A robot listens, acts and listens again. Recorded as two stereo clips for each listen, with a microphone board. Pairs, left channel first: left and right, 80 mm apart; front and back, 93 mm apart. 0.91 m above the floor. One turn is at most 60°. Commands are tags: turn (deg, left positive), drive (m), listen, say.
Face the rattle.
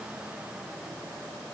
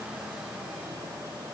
<listen/>
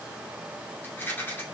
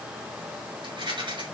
<turn deg="60"/>
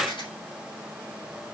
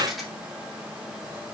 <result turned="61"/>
<turn deg="60"/>
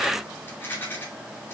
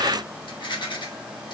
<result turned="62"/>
<turn deg="30"/>
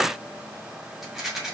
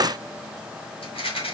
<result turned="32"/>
<say>Found it: a rattle, straight ahead.</say>